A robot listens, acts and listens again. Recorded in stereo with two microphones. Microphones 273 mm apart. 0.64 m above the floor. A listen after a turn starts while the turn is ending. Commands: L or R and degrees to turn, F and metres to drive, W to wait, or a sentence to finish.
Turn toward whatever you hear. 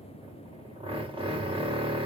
R20
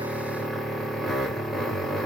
Found it: a drill, straight ahead.